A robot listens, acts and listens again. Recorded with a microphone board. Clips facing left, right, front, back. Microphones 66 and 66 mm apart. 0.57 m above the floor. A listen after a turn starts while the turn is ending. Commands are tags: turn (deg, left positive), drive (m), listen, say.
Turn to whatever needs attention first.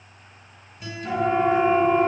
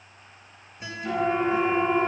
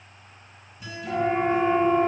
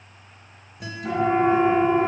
<turn deg="175"/>
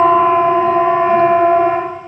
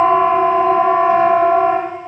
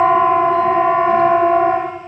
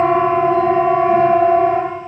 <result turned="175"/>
<turn deg="-40"/>
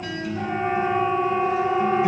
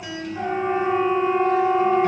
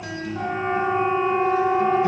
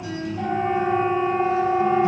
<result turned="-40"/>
<turn deg="-20"/>
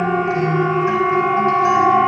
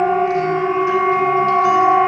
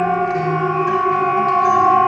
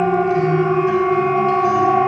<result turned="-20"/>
<say>Found it: a siren, straight ahead.</say>